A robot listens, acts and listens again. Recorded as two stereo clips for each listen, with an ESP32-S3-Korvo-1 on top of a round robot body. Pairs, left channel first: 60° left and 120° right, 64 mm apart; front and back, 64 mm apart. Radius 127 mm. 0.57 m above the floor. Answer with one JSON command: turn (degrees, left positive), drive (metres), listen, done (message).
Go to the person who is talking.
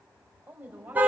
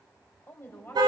{"turn": -55}
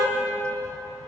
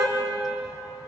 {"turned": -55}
{"listen": true}
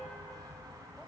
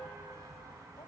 {"listen": true}
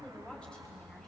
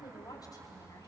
{"turn": -15}
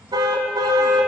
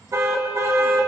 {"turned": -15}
{"listen": true}
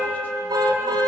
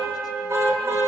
{"listen": true}
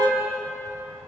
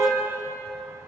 {"done": "Facing where the woman speaking came from. I can't hear it now. I did not reach it."}